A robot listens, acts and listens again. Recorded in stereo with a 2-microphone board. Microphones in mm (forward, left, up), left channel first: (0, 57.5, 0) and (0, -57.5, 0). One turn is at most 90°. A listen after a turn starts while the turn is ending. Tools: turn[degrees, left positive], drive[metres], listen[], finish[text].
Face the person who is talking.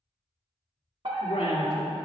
Action: turn[90]
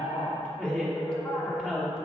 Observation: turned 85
Action: finish[Facing the woman speaking, 2 to 4 m away.]